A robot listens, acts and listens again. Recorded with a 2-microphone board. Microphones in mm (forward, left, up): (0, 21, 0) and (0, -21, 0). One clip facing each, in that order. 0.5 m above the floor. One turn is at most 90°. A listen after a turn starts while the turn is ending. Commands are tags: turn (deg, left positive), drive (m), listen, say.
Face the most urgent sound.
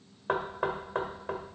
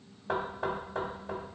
<listen/>
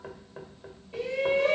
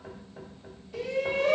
<turn deg="25"/>
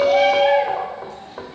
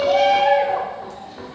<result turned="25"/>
<say>Facing the shout.</say>